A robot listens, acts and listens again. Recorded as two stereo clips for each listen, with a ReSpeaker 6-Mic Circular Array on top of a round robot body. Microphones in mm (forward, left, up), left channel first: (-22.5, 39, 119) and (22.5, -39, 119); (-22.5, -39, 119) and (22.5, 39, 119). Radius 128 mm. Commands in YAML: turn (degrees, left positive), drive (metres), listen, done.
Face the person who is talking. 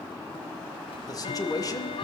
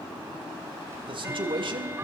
turn: 75
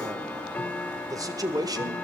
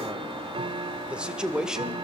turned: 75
turn: -20
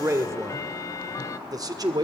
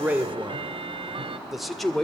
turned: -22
turn: -35
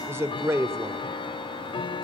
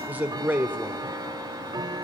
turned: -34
done: "Facing the man speaking, 1 to 2 m away."